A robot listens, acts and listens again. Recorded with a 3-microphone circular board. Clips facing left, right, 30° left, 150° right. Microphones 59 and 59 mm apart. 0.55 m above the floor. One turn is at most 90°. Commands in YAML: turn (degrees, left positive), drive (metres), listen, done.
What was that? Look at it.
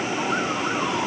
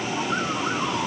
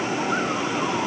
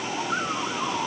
listen: true
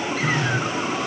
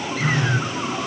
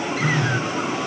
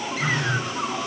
turn: -30
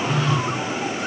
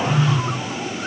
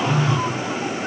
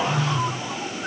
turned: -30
turn: -10
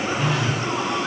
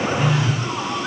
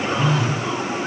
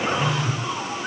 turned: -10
done: "Facing the phone buzzing."